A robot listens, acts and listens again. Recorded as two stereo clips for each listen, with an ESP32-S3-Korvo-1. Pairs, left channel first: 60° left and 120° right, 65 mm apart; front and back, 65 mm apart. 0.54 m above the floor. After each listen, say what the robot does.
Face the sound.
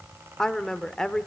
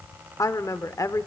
Turn 20° right.
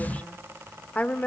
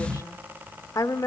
Found it: a woman speaking, straight ahead, 1 to 2 m away.